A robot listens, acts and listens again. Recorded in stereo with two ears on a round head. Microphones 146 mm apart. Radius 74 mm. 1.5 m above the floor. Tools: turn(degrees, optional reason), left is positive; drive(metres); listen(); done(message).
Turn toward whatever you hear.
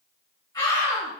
turn(degrees=25, reason="The scream: about 25° left or 155° left.")
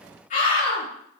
turn(degrees=130, reason="So it is at 130° left.")
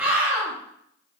turn(degrees=-15, reason="The scream is now 15° right.")
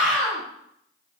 done("Found it: a scream, straight ahead.")